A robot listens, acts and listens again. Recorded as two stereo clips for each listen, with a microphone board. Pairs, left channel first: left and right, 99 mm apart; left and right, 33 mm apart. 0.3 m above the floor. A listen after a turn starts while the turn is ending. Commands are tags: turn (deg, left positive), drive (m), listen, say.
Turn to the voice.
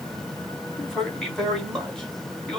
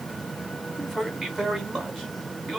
<turn deg="30"/>
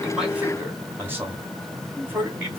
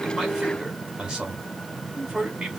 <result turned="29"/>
<turn deg="-25"/>
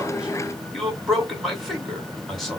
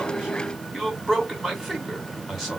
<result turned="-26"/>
<say>Found it: a man speaking, straight ahead.</say>